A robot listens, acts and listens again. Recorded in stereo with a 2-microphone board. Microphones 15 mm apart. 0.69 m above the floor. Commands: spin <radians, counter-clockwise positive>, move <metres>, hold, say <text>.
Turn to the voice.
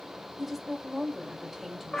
spin -0.52
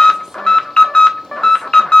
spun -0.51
hold
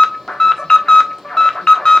hold
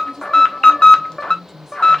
spin -2.62
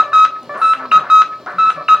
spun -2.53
hold
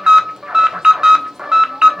hold
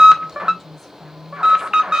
say Found it: a woman speaking, straight ahead.